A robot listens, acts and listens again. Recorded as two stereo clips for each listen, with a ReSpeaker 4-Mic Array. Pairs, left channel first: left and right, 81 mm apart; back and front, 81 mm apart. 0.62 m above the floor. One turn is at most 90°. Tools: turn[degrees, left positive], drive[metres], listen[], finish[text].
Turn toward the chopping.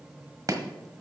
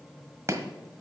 Thought: The chopping: 50° right.
Action: turn[-50]
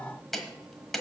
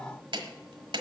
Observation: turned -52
Action: finish[Found it: chopping, straight ahead, 1 to 2 m away.]